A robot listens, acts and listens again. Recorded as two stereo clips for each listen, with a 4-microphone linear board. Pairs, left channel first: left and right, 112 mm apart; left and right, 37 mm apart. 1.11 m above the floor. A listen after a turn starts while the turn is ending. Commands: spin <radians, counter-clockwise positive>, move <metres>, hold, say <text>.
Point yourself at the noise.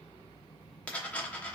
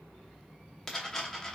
spin 0.52
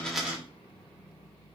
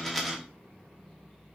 hold
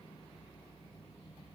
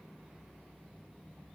say I heard a dropped coin, but can't make it out now. It was about 20° right or 140° left.